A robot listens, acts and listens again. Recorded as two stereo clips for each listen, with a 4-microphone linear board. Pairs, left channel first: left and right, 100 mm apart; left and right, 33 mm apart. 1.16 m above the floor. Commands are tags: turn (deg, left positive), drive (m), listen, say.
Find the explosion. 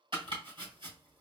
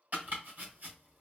<listen/>
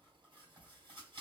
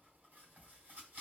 <listen/>
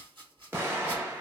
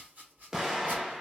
<turn deg="-20"/>
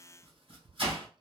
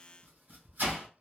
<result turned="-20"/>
<listen/>
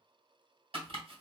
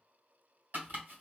<say>I heard an explosion, but can't make it out now. It was about straight ahead or 140° right.</say>